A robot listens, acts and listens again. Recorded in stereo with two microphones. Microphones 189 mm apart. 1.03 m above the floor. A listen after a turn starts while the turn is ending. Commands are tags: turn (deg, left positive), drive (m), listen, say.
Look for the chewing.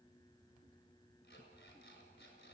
<listen/>
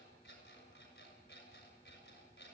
<listen/>
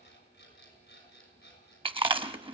<turn deg="-25"/>
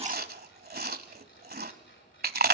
<turn deg="-125"/>
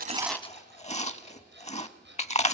<turn deg="35"/>
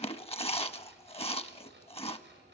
<turn deg="30"/>
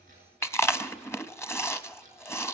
<turn deg="15"/>
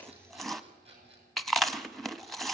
<say>Facing the chewing.</say>